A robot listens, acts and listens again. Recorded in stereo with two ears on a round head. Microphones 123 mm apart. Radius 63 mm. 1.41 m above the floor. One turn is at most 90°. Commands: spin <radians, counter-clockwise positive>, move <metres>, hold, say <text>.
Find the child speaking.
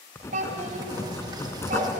spin -1.13
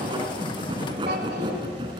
hold
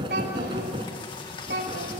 spin -1.31
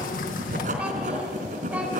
hold
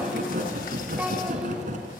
hold
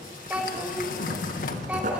spin -0.17
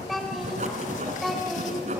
say Facing the child speaking.